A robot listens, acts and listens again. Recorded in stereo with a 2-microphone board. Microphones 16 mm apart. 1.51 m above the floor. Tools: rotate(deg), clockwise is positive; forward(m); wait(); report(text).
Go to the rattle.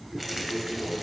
rotate(30)
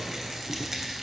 rotate(140)
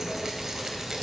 rotate(30)
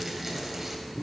wait()
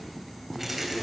rotate(10)
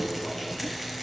forward(1.0)
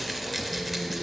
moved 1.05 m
forward(1.0)
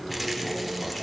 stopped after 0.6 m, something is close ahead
wait()
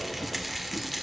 report("I am next to the rattle.")